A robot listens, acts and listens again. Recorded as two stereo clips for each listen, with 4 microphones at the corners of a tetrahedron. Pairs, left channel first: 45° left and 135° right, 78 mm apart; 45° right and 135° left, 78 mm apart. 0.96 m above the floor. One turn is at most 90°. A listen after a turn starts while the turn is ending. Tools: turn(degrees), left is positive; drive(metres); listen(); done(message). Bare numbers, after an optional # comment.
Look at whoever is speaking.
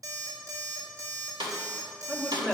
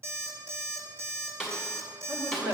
# The man speaking: 135° left.
turn(90)
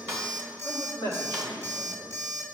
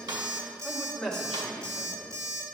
# The man speaking is now 40° left.
turn(40)
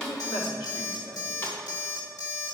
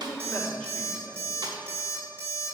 # The man speaking is now 20° left.
turn(20)
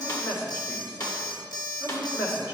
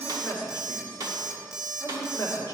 done("Facing the man speaking.")